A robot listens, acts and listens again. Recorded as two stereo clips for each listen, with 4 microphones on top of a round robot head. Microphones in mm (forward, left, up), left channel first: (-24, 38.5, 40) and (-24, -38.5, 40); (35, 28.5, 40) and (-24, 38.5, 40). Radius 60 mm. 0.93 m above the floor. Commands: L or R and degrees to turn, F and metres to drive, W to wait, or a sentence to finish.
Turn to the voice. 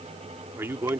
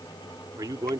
R150
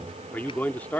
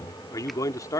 L15
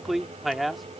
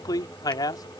Found it: a man speaking, straight ahead.